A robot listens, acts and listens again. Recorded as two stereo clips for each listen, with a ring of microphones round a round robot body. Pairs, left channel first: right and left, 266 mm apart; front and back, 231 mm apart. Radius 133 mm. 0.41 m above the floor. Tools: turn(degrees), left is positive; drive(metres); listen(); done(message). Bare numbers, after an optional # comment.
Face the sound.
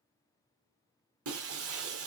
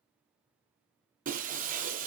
# The breaking glass: 125° left.
turn(125)
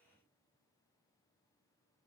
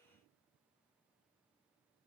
done("I heard breaking glass from this way, but can't make it out now.")